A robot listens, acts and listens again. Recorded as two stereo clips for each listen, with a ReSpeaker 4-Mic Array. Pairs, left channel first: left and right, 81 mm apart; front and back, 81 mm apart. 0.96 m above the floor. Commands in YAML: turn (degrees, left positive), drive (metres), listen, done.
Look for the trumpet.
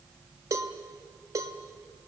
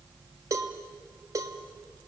listen: true
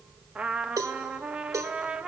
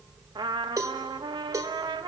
turn: -170
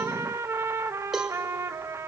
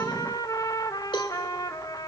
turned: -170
turn: -40
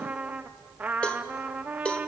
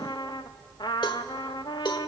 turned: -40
turn: -20
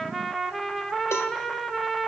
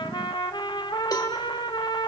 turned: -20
done: "Facing the trumpet."